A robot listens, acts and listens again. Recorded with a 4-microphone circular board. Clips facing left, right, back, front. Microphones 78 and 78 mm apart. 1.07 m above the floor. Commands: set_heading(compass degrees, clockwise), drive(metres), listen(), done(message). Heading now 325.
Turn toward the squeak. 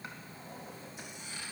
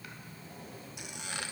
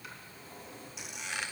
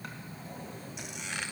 set_heading(55)
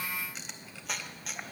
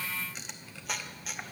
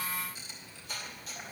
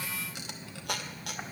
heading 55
done("Facing the squeak.")